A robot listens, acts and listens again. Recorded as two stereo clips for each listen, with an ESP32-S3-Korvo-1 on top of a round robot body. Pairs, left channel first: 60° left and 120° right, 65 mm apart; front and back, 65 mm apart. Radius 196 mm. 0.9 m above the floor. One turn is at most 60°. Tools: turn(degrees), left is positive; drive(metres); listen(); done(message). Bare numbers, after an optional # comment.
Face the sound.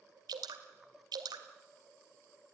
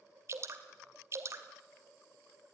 # The dripping: 130° right.
turn(-60)
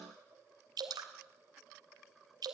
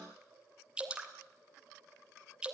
# The dripping is now 105° right.
turn(-60)
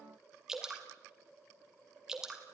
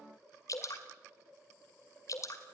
# The dripping is now 35° right.
turn(-35)
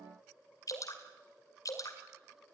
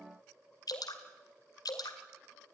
# The dripping is now 25° left.
turn(25)
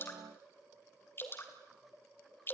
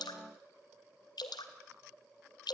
done("Facing the dripping, 2 to 4 m away.")